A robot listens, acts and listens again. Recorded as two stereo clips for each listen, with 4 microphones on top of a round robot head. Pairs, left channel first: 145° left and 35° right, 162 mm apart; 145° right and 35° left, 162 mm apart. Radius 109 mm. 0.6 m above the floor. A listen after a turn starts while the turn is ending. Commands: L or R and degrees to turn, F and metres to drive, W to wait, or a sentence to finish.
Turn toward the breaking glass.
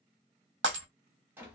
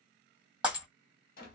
R50
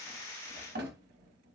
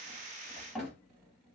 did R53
I heard breaking glass from this way, but can't make it out now.